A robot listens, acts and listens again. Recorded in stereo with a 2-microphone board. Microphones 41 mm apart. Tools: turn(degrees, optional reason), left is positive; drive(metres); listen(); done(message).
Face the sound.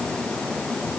listen()
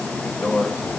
turn(degrees=60, reason="The microwave: about 60° left or 120° left.")
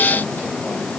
listen()
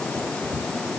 listen()
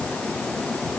done("I heard a microwave, but can't make it out now. It was about straight ahead or 60° left.")